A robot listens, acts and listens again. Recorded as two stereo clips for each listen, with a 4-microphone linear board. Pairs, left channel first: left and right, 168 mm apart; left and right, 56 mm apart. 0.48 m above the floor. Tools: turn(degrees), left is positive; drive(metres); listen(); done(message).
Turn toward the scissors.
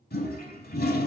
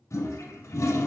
listen()
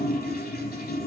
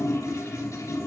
listen()
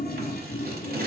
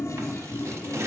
turn(degrees=-70)
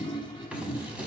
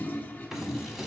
turn(degrees=-10)
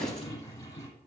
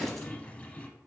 done("Facing the scissors.")